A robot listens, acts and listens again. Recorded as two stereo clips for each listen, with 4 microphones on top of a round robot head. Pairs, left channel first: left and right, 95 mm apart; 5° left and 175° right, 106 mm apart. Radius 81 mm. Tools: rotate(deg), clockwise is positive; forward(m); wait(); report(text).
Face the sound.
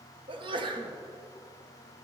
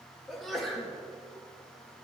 rotate(85)
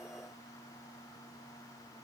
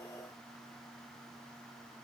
report("I heard a sneeze from this way, but can't make it out now.")